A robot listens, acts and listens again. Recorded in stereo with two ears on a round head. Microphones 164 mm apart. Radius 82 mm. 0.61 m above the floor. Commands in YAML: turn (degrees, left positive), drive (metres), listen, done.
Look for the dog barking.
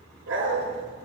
turn: -90
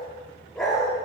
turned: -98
done: "Facing the dog barking, 2 to 4 m away."